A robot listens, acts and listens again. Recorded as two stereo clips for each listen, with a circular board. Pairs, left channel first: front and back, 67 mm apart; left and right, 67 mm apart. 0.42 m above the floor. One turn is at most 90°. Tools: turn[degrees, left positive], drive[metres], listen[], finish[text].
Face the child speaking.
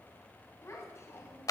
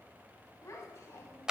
Thought: The child speaking: 45° left.
Action: turn[45]
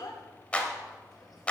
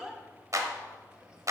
Thought: The child speaking is now 10° right.
Action: turn[-10]
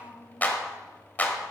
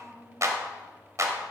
Action: finish[Facing the child speaking, 2 to 4 m away.]